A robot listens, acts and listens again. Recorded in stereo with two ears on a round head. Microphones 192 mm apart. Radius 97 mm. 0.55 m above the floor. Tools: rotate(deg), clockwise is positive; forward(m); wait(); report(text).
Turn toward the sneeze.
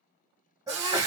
rotate(15)
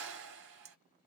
wait()
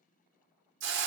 report("I heard a sneeze, but can't make it out now. It was about straight ahead or 150° right.")